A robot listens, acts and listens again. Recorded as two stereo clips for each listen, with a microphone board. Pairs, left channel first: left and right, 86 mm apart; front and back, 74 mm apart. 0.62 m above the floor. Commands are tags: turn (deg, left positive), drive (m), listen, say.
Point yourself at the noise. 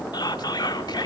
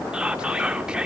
<turn deg="105"/>
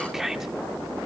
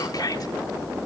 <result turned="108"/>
<say>Facing the whispering, 1 to 2 m away.</say>